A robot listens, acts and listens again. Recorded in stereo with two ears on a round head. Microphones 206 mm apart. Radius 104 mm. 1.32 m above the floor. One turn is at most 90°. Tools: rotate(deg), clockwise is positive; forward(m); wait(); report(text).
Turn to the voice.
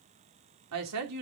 rotate(90)
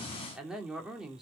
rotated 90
report("Facing the woman speaking.")